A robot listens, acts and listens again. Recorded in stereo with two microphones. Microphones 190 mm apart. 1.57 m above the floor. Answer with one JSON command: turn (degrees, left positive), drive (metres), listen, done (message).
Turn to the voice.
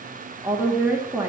{"turn": -30}
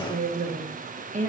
{"turn": -140}
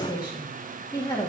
{"turn": 20}
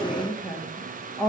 {"done": "Found it: a woman speaking, straight ahead."}